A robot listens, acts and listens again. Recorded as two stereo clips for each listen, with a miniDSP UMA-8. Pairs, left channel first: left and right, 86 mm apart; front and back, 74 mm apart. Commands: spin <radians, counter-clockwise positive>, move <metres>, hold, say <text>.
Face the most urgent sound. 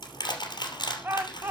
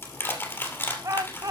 spin -2.62
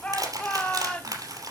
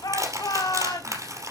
spin 0.26
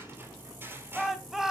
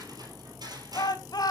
say Found it: a shout, straight ahead, 2 to 4 m away.